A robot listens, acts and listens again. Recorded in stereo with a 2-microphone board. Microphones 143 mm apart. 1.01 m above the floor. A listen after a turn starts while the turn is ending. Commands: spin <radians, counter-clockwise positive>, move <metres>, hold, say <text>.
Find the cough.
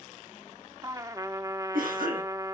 spin -1.57
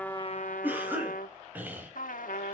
spin -0.17
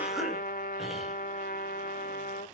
say Found it: a cough, straight ahead, over 4 m away.